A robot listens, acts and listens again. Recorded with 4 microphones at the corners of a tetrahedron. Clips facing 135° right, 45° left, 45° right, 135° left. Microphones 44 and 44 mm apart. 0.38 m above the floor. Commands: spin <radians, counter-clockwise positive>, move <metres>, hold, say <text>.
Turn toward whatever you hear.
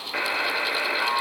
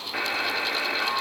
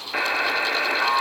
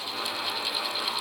spin -1.05
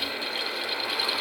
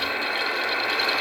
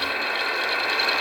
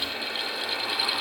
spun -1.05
say Found it: a buzzer, straight ahead, under 1 m away.